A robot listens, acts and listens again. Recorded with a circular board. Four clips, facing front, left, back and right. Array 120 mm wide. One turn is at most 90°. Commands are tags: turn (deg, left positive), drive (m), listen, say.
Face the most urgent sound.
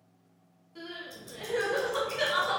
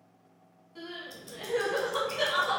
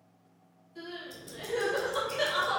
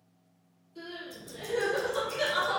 <turn deg="45"/>
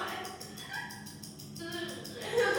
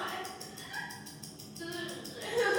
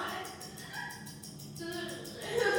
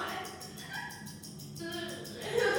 <say>Found it: crying, straight ahead, 1 to 2 m away.</say>